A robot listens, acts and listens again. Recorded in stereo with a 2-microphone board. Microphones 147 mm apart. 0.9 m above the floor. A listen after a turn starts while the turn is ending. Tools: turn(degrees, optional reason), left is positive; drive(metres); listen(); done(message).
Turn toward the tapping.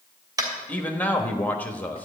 turn(degrees=-25, reason="The tapping: about 25° right or 155° right.")
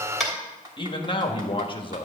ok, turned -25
listen()
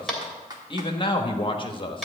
done("Facing the tapping.")